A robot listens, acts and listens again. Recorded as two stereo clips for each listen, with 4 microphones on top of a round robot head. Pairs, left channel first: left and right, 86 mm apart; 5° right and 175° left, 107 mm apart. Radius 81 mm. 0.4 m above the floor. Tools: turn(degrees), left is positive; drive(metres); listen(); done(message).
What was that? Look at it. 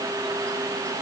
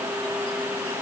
listen()
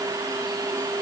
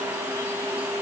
listen()
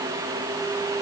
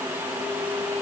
done("I can't make out anything to turn to.")